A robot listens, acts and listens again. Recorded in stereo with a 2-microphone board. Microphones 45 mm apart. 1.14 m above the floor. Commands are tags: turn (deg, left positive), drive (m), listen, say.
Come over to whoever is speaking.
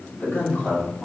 <turn deg="45"/>
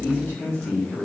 <turn deg="85"/>
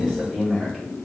<drive m="1.0"/>
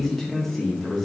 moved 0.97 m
<drive m="1.0"/>
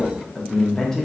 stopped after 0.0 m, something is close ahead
<turn deg="10"/>
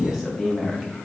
<say>I am next to the man speaking.</say>